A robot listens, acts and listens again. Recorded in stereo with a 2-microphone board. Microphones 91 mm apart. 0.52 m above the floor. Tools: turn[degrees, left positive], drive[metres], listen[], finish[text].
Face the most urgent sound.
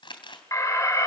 Thought: The alarm: about 40° left or 140° left.
Action: turn[40]
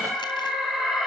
Action: finish[Facing the alarm, over 4 m away.]